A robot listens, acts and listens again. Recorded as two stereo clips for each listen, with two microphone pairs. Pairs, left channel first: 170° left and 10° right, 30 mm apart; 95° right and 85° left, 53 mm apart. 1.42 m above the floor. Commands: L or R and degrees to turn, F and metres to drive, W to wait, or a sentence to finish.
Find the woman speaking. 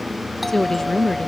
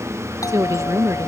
L100
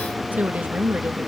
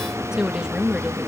L10
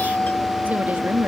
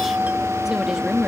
Facing the woman speaking.